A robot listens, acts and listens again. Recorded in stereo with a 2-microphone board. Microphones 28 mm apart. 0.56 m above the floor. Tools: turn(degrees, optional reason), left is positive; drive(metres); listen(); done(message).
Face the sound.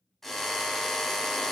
turn(degrees=30)
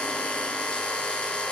turn(degrees=140, reason="So it is at 140° left.")
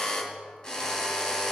turn(degrees=25, reason="The drill is now 25° left.")
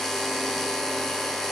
turn(degrees=15, reason="The drill is now 15° left.")
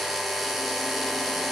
done("Facing the drill.")